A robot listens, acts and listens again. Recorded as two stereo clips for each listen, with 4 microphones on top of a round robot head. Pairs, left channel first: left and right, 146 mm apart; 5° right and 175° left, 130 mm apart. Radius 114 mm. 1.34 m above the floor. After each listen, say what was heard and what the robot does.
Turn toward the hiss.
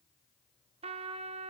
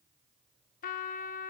Keep listening.
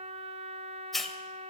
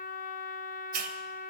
The hiss: straight behind. Turn 180° left.
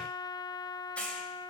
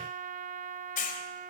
Facing the hiss, 2 to 4 m away.